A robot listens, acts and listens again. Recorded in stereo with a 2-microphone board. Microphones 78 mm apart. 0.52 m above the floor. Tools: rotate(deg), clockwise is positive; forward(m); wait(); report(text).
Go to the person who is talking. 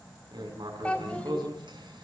rotate(-20)
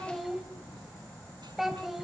forward(1.0)
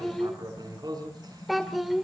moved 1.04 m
forward(1.0)
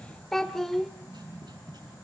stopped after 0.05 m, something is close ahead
report("Arrived at the child speaking, straight ahead.")